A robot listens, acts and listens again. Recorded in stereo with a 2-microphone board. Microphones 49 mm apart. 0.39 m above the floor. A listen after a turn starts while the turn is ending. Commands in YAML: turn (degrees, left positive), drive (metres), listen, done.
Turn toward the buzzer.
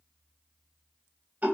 listen: true
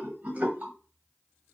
listen: true
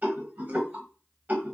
done: "I can't make out a buzzer, only a rattle."